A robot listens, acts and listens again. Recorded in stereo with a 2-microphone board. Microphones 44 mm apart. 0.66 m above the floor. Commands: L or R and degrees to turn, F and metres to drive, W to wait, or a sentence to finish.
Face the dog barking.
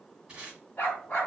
L35
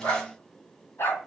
L125
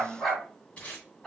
Facing the dog barking, 2 to 4 m away.